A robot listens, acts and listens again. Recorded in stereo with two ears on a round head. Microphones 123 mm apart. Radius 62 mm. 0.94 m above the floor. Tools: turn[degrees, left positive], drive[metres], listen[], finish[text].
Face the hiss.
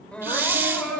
Thought: The hiss: about 15° right or 165° right.
Action: turn[-15]
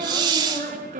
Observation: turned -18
Thought: So it is at 145° right.
Action: turn[-145]
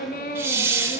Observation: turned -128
Thought: The hiss is now 15° right.
Action: turn[-15]
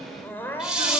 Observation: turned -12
Action: finish[Facing the hiss.]